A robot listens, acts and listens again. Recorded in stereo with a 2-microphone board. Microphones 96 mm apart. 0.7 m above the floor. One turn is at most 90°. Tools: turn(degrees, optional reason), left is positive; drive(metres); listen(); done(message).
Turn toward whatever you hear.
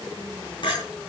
turn(degrees=50, reason="The clink: about 50° left or 130° left.")
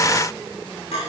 turn(degrees=80, reason="So it is at 80° left.")
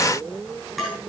done("Found it: a clink, straight ahead, over 4 m away.")